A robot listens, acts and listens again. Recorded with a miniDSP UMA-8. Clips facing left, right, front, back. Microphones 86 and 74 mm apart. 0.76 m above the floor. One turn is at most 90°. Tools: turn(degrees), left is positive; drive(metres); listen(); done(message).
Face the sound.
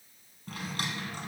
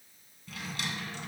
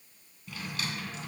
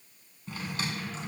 turn(degrees=90)
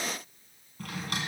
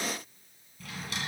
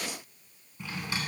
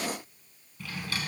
turn(degrees=65)
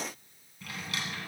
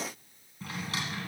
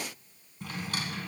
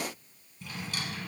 turn(degrees=-35)
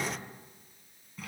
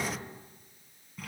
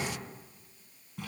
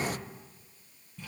done("Facing the drawer, 1 to 2 m away.")